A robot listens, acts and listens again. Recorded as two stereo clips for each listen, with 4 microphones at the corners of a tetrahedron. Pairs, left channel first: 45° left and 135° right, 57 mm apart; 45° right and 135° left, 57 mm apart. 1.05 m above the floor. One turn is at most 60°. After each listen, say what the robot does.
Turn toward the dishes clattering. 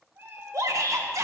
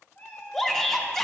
Keep listening.
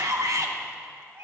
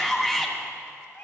Keep listening.
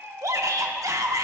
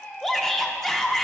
I can't make out dishes clattering, only a shout and a cat meowing.